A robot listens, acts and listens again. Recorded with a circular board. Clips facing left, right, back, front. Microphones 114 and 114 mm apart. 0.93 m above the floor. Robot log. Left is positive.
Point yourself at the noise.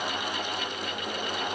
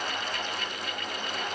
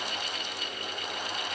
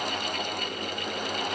cmd idle
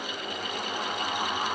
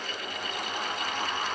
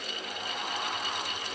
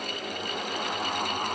cmd idle
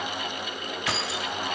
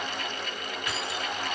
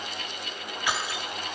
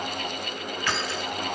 note: The keys jangling: 100° left.
cmd yaw +100
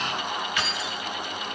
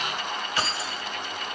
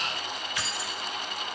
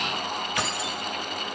note: The keys jangling is now 35° right.
cmd yaw -35
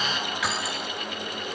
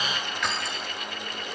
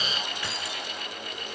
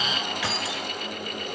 end: Found it: keys jangling, straight ahead.